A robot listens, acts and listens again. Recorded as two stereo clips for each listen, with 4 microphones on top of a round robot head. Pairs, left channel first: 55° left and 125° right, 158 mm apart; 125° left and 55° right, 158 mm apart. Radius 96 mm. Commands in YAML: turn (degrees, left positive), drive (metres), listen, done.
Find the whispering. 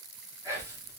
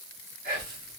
turn: -55
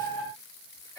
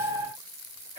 turn: -15
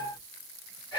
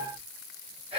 done: "Found it: whispering, straight ahead."